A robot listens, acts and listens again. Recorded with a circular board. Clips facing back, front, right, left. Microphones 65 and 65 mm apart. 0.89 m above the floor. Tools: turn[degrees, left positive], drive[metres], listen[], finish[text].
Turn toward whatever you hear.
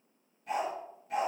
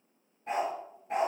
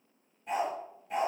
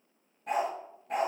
Thought: The dog barking: 60° left.
Action: turn[60]
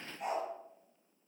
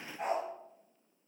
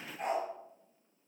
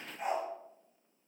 Action: finish[Found it: a dog barking, straight ahead.]